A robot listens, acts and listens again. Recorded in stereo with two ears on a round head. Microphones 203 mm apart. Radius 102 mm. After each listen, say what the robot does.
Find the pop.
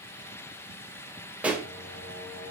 Turn 30° right.
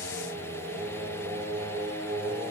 Keep listening.
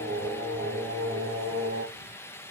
I heard a pop, but can't make it out now. It was about 25° left or 145° right.